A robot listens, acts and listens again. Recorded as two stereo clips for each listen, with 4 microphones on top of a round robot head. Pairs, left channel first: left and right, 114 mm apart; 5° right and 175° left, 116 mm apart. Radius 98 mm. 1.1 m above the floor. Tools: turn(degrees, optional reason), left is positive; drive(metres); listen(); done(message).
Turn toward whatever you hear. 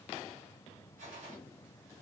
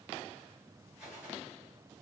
turn(degrees=-95, reason="The gunshot: 95° right.")
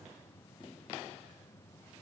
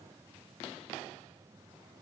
done("I heard a gunshot from this way, but can't make it out now.")